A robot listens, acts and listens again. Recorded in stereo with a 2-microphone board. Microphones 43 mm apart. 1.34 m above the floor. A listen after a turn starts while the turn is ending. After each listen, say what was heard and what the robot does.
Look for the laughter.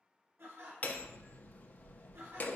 Turn 90° right.
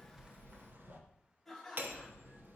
Facing the laughter, 1 to 2 m away.